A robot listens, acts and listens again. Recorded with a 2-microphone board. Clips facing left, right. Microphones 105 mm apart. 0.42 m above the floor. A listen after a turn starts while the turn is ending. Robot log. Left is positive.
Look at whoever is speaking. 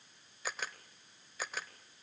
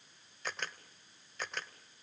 cmd idle
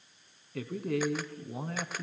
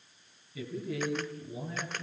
note: The man speaking: about 65° left or 115° left.
cmd yaw +65
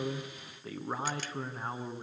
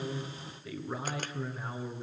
note: So it is at 40° left.
cmd yaw +40
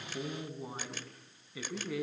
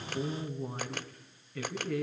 note: The man speaking is now 10° left.
cmd yaw +10
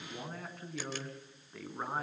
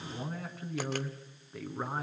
end: Facing the man speaking.